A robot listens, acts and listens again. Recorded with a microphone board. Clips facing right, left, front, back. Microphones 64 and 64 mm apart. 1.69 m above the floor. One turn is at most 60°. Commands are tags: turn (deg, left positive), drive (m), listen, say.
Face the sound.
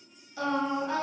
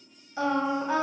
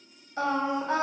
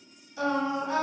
<turn deg="15"/>
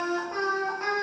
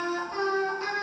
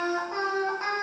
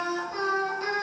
<turn deg="-50"/>
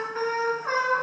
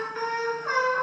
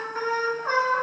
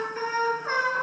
<turn deg="-40"/>
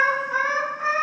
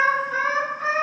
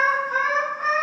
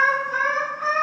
<turn deg="-15"/>
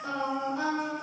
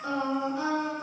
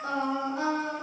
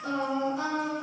<say>Facing the singing, 2 to 4 m away.</say>